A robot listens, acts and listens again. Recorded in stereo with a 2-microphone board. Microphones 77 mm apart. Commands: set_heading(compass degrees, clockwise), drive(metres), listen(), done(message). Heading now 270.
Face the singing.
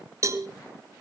listen()
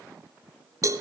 listen()
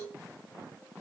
done("I can't make out singing, only a cowbell.")